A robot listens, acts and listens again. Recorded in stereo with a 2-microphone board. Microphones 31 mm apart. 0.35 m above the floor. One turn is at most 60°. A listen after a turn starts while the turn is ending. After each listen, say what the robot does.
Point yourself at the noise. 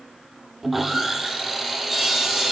Turn 30° right.
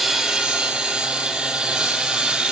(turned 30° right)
Turn 60° right.
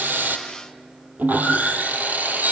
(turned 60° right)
Turn 60° right.
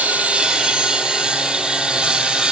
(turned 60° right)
Turn 25° right.
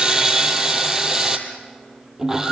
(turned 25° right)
Turn 15° right.
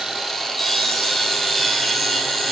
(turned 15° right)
Facing the sawing.